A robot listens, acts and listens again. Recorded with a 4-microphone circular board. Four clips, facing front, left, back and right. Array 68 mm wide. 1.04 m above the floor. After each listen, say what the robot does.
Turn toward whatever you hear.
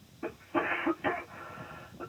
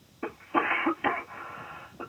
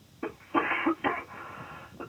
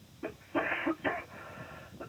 Turn 110° left.
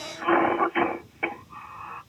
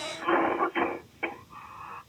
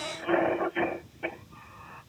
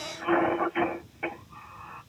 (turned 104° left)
Facing the cough.